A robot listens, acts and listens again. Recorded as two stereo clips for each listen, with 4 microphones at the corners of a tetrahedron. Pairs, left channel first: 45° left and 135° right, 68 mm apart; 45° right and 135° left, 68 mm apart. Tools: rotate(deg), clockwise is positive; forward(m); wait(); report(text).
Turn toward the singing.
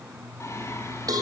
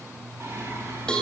rotate(-85)
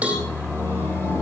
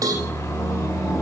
report("Found it: singing, straight ahead.")